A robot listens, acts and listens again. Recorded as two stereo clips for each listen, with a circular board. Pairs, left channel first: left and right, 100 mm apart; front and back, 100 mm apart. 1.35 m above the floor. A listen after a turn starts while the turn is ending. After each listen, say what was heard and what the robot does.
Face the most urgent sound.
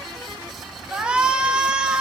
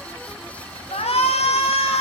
The shout: 10° right. Turn 10° right.
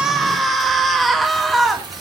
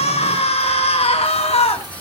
Found it: a shout, straight ahead, 2 to 4 m away.